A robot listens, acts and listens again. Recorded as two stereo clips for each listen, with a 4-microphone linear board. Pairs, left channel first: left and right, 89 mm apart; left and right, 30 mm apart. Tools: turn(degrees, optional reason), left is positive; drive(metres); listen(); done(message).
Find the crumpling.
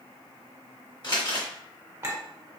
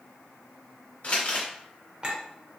turn(degrees=55, reason="The crumpling: about 55° left or 125° left.")
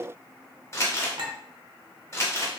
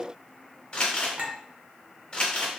turn(degrees=40, reason="So it is at 40° left.")
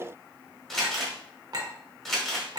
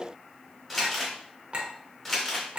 done("Found it: crumpling, straight ahead.")